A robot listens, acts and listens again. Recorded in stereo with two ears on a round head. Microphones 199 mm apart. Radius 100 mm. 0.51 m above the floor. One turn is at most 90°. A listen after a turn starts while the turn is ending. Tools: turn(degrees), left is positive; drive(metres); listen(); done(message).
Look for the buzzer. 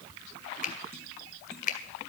listen()
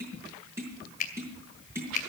listen()
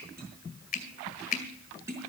done("I can't make out a buzzer to turn to.")